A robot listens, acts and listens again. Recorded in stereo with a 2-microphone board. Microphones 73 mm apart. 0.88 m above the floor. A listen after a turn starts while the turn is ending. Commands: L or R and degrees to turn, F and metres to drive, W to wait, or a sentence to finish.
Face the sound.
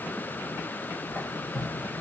L20
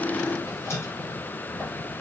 L135
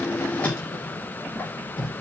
L20
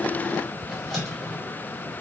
Facing the squeak, 1 to 2 m away.